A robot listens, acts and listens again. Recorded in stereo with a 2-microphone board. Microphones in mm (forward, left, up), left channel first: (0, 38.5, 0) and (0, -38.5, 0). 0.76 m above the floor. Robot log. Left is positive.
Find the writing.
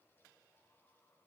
cmd idle
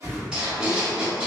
cmd yaw -30
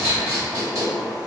note: So it is at 135° right.
cmd yaw -135
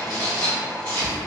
note: The writing is now 35° left.
cmd yaw +35
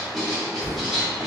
end: Found it: writing, straight ahead, 1 to 2 m away.